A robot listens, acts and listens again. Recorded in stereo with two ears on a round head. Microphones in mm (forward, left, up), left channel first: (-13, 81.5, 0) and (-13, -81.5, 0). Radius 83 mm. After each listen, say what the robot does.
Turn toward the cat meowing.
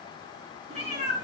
Turn 35° right.
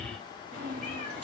Turn 110° right.
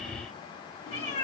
Turn 30° left.
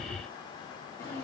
Turn 15° left.
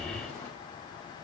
Found it: a cat meowing, straight ahead.